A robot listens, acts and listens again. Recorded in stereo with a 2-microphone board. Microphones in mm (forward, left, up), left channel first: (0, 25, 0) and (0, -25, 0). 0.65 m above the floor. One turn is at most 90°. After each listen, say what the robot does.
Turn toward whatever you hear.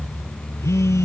Turn 90° left.
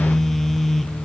Facing the phone buzzing.